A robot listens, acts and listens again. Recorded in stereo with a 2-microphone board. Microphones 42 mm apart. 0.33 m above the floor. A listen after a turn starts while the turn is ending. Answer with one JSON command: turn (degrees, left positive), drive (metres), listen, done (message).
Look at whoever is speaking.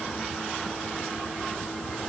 {"listen": true}
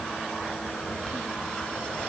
{"listen": true}
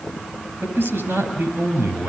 {"turn": -55}
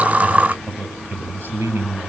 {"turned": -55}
{"turn": -70}
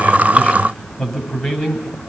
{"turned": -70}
{"turn": 10}
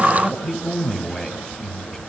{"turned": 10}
{"done": "Found it: a man speaking, straight ahead, over 4 m away."}